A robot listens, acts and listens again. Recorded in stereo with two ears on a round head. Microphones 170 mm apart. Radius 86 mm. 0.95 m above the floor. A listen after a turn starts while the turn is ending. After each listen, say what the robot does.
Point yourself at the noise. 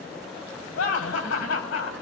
Turn 90° left.
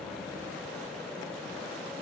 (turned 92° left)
Keep listening.
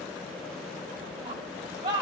Turn 20° right.
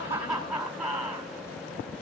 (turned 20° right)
Facing the laughter.